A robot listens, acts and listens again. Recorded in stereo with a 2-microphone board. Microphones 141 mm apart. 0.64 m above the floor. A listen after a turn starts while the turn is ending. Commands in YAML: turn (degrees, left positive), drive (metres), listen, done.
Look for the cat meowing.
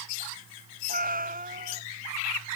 turn: -70
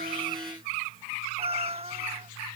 turn: -40
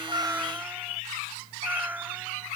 turn: -10
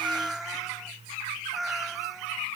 done: "Facing the cat meowing."